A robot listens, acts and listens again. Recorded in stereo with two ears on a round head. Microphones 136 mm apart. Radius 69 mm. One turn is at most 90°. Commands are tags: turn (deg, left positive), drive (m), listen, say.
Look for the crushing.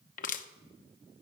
<turn deg="60"/>
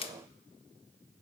<turn deg="40"/>
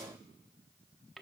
<say>Found it: crushing, straight ahead.</say>